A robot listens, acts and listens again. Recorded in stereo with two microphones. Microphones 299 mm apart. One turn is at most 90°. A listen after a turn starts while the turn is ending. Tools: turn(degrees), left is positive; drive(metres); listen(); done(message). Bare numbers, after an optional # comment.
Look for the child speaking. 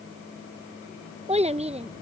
# The child speaking: about 20° right or 160° right.
turn(-20)
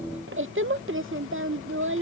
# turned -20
# So it is at 135° right.
turn(-90)
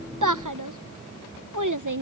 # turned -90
# The child speaking is now 90° right.
turn(-90)
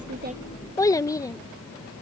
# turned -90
# The child speaking is now 10° left.
turn(10)
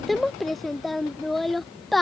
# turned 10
done("Facing the child speaking.")